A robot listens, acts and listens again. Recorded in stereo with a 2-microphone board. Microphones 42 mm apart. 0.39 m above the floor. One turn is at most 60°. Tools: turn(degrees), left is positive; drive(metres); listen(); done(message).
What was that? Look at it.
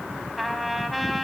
turn(degrees=30)
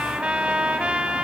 turn(degrees=-30)
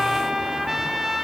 turn(degrees=-10)
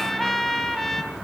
done("Found it: a trumpet, straight ahead, 2 to 4 m away.")